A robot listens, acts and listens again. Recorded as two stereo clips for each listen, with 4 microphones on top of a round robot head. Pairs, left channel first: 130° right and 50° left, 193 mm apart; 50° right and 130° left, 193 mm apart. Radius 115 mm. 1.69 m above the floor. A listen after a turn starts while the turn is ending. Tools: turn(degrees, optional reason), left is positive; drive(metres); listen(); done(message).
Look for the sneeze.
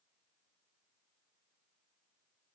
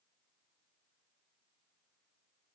listen()
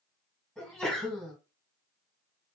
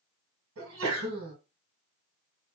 turn(degrees=140, reason="The sneeze: 140° left.")
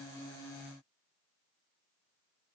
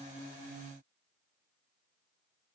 done("I heard a sneeze from this way, but can't make it out now.")